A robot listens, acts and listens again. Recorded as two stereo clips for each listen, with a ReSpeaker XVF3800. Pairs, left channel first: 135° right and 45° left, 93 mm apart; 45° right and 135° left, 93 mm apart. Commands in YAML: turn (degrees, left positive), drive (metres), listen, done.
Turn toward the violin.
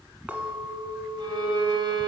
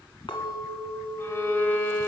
turn: 20
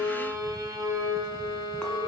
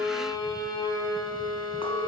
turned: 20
done: "Facing the violin, 1 to 2 m away."